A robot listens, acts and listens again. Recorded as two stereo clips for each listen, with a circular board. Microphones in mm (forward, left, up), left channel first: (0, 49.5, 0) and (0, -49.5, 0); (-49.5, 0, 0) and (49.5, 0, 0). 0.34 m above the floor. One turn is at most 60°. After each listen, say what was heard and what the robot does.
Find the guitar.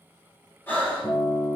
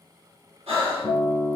The guitar: 120° left. Turn 60° left.
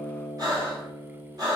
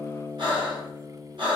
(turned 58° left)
The guitar is now 60° left. Turn 60° left.
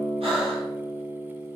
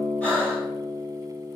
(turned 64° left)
Facing the guitar, under 1 m away.